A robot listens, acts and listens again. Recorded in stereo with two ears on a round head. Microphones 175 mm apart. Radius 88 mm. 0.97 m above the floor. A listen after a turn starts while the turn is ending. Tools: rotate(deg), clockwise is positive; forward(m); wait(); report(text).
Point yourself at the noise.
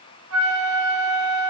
rotate(90)
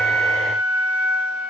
report("Facing the flute.")